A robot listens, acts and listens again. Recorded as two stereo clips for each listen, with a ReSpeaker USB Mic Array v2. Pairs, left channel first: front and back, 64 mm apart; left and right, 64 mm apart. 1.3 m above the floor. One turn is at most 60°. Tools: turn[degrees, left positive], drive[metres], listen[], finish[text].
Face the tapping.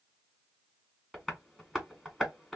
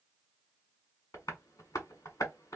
Thought: The tapping: 85° left.
Action: turn[60]
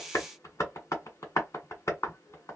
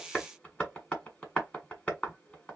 Thought: The tapping is now 20° left.
Action: turn[20]
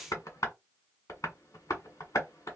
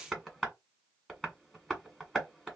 Action: finish[Facing the tapping.]